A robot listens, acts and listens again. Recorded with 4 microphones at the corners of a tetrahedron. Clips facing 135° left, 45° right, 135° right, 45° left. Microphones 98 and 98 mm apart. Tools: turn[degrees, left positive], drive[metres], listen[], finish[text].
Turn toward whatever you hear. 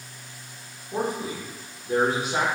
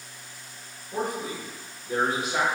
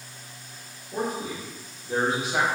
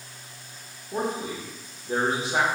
Thought: The man speaking: 100° left.
Action: turn[100]
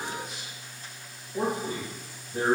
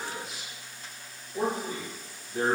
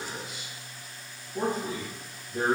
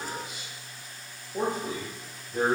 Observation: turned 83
Thought: The man speaking is now 75° left.
Action: turn[75]
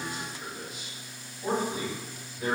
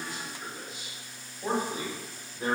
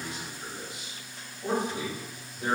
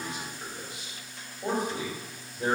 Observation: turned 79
Action: finish[Facing the man speaking.]